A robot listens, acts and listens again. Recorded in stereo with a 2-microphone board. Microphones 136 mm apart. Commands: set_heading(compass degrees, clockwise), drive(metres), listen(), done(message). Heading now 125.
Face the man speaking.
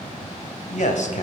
set_heading(65)
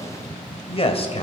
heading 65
set_heading(20)
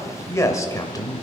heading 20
set_heading(355)
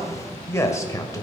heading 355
set_heading(330)
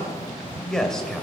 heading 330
done("Found it: a man speaking, straight ahead.")